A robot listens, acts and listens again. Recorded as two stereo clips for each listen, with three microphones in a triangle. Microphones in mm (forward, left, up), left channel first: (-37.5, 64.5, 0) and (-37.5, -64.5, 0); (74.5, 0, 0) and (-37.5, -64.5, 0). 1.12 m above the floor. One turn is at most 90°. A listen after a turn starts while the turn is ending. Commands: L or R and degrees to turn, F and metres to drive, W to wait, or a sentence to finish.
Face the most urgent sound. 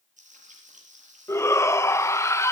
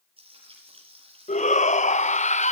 L25
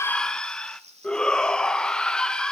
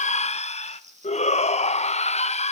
Facing the shout, 1 to 2 m away.